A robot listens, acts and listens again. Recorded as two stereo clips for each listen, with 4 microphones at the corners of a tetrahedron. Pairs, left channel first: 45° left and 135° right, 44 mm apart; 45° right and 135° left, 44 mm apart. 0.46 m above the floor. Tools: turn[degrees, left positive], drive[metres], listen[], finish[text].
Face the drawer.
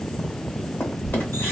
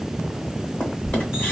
Thought: The drawer: 15° left.
Action: turn[15]
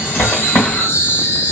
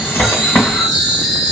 Action: finish[Facing the drawer.]